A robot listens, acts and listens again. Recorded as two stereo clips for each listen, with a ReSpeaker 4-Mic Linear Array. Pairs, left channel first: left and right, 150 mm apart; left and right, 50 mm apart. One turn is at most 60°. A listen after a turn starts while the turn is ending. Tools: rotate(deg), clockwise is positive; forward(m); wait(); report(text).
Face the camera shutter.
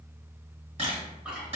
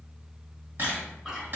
rotate(45)
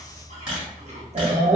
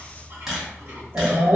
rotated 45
rotate(10)
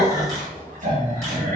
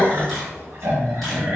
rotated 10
wait()
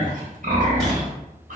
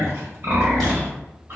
wait()
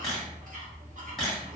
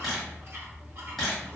report("Found it: a camera shutter, straight ahead, 1 to 2 m away.")